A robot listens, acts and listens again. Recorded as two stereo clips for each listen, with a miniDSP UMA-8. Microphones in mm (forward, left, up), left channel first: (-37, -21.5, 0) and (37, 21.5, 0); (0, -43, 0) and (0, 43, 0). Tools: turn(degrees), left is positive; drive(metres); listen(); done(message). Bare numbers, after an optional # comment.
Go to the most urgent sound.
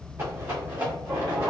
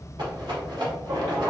# The shout: 125° left.
turn(125)
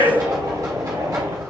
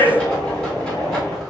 # The shout is now 25° left.
turn(25)
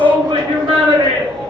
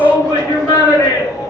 drive(1.0)
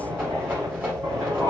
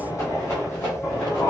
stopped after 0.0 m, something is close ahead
done("Blocked. The shout is further on, straight ahead.")